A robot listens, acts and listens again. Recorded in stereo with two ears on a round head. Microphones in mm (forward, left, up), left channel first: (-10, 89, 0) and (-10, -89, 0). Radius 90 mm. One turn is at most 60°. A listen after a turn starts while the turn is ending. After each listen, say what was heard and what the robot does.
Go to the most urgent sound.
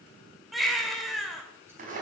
Turn 30° left.
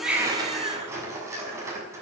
So it is at 30° right. Turn 30° right.
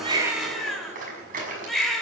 Drive 1.0 m forward.
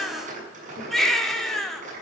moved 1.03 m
Drive 1.0 m forward.
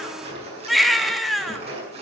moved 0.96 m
Drive 1.0 m forward.
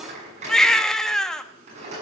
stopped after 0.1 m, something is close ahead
I am next to the baby crying.